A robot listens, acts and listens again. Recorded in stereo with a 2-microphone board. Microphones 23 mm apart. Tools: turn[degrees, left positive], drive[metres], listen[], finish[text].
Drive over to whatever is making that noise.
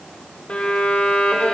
Thought: The violin: about 65° left or 115° left.
Action: turn[65]
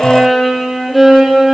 Action: drive[1.0]
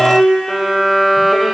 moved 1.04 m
Action: drive[1.0]
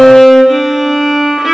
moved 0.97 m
Thought: The violin is now 10° right.
Action: turn[-10]
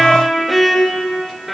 Action: drive[1.0]
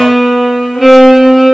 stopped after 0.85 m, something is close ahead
Action: finish[Arrived at the violin, straight ahead.]